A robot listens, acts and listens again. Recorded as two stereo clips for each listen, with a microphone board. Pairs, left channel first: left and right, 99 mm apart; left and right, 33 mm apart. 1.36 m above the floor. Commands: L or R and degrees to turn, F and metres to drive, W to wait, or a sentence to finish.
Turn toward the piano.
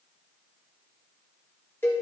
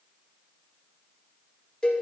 W
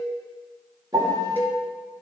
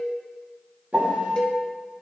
R40
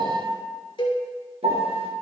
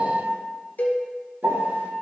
R95
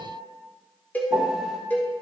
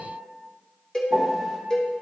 Found it: a piano, straight ahead.